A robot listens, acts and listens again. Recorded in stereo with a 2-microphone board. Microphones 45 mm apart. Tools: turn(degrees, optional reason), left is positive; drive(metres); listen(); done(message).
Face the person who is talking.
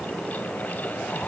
listen()
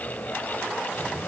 listen()
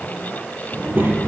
turn(degrees=-50, reason="The child speaking: about 50° right or 130° right.")
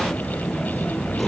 done("Facing the child speaking, over 4 m away.")